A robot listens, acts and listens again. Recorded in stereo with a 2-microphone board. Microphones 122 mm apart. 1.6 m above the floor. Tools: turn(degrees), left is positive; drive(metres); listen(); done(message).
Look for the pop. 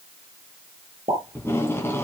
turn(degrees=-50)
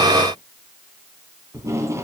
listen()
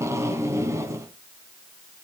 done("I heard a pop, but can't make it out now. It was about straight ahead or 80° right.")